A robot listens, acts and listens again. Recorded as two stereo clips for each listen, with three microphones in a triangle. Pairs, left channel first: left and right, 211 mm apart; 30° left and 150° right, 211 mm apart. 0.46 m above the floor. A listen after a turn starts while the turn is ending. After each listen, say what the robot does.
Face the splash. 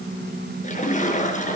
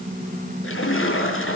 Turn 35° left.
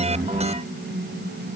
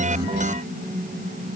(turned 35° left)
I heard a splash from this way, but can't make it out now.